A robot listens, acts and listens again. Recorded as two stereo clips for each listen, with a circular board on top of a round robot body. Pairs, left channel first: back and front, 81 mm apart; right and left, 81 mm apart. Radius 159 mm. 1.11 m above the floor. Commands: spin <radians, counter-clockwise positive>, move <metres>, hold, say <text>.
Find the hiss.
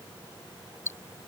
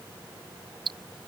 hold
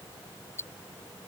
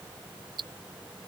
hold
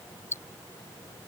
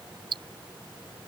say I can't make out a hiss to turn to.